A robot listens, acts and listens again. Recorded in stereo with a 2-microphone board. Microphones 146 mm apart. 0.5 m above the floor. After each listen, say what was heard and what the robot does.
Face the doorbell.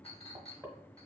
Keep listening.
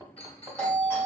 Turn 30° left.
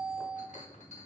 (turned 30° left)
So it is at 15° right. Turn 15° right.
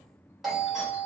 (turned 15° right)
Facing the doorbell.